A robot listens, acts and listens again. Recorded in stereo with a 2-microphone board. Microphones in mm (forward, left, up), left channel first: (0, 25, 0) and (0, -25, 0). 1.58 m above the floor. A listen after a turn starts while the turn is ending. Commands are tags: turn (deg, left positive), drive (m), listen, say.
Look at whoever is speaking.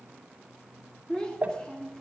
<turn deg="15"/>
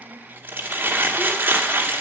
<listen/>
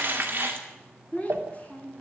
<turn deg="150"/>
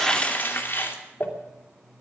<turn deg="-35"/>
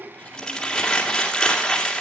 <listen/>
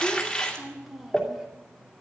<say>Found it: a child speaking, straight ahead, 2 to 4 m away.</say>